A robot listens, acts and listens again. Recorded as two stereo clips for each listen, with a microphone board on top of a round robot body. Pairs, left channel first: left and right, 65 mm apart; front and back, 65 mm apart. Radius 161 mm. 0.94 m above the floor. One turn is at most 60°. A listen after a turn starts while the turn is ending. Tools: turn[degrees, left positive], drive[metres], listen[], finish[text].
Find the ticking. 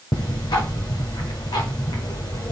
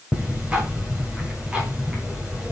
Thought: The ticking: 105° left.
Action: turn[60]
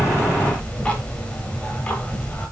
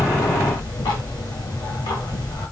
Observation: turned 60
Thought: The ticking is now 20° left.
Action: turn[20]
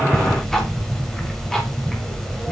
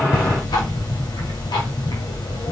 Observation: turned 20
Action: finish[Facing the ticking, 1 to 2 m away.]